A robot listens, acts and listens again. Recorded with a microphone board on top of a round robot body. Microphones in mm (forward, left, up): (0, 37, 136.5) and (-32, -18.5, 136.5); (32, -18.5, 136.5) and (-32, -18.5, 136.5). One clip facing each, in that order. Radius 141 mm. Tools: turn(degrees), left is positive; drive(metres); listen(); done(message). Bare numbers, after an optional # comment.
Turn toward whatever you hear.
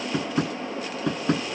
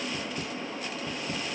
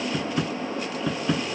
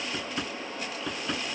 # The tapping: 90° left.
turn(90)
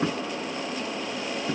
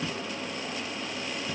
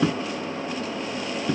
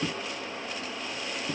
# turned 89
done("Facing the tapping.")